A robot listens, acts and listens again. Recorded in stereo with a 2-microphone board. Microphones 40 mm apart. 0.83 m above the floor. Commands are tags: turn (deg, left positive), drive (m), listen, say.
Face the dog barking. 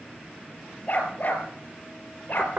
<turn deg="55"/>
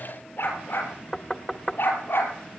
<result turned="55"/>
<turn deg="60"/>
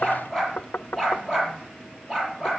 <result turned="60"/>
<turn deg="-15"/>
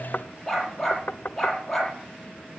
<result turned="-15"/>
<say>Found it: a dog barking, straight ahead, over 4 m away.</say>